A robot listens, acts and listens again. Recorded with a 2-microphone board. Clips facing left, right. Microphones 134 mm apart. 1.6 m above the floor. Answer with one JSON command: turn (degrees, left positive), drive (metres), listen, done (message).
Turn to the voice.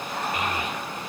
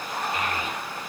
{"turn": 20}
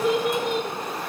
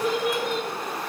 {"done": "Found it: a child speaking, straight ahead."}